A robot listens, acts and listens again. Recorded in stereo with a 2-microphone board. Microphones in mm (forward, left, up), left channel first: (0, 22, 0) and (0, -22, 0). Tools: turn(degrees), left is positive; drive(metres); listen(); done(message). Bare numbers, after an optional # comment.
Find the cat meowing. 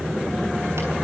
listen()
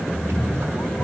turn(90)
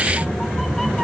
done("Facing the cat meowing, 2 to 4 m away.")